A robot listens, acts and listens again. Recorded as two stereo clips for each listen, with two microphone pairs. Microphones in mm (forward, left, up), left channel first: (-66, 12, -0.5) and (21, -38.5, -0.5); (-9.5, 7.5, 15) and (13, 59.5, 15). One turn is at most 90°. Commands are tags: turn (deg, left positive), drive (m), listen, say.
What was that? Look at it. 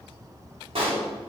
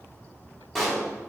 <turn deg="-30"/>
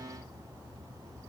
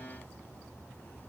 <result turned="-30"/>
<say>I heard a pop from this way, but can't make it out now.</say>